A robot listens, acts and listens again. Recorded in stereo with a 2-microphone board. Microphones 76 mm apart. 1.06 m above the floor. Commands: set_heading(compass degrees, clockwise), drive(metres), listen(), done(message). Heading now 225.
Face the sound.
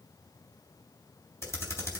set_heading(190)
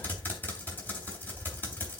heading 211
set_heading(186)
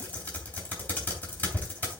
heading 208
set_heading(188)
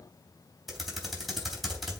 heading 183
done("Found it: typing on a keyboard, straight ahead.")